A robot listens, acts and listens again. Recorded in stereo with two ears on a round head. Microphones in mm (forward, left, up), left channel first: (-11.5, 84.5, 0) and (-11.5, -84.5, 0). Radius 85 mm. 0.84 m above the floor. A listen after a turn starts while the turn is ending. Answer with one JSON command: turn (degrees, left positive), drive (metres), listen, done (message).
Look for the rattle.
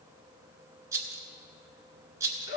{"turn": -15}
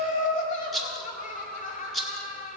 {"done": "Facing the rattle, 1 to 2 m away."}